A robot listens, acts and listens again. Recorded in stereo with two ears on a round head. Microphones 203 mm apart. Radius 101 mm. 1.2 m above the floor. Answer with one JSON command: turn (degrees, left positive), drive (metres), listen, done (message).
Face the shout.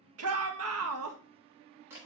{"turn": -70}
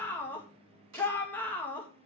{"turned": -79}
{"turn": 10}
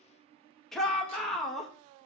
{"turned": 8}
{"done": "Facing the shout."}